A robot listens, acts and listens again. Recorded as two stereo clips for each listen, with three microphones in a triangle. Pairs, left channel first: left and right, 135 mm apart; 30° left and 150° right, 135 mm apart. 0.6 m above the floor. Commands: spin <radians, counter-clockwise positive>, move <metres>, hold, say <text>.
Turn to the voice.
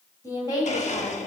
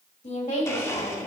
spin 0.52
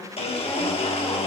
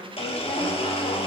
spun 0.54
say Found it: a woman speaking, straight ahead.